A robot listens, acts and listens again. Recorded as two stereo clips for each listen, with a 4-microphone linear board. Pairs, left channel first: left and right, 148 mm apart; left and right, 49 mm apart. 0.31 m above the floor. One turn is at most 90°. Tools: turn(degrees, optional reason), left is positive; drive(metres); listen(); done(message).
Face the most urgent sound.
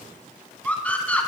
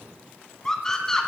turn(degrees=30)
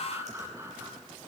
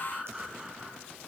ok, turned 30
turn(degrees=-20, reason="So it is at 20° right.")
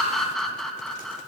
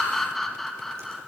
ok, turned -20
done("Found it: a scream, straight ahead, 2 to 4 m away.")